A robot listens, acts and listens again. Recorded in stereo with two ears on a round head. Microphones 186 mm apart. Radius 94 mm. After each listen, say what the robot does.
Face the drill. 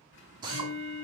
Turn 20° right.
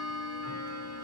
Keep listening.
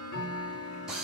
Found it: a drill, straight ahead.